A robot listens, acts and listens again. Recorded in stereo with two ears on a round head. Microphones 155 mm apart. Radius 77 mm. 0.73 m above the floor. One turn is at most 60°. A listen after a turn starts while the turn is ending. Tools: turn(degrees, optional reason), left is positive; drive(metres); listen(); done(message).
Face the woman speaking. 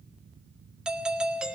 listen()
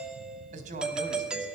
turn(degrees=-50, reason="The woman speaking: about 50° right or 130° right.")
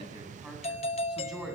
done("Facing the woman speaking, over 4 m away.")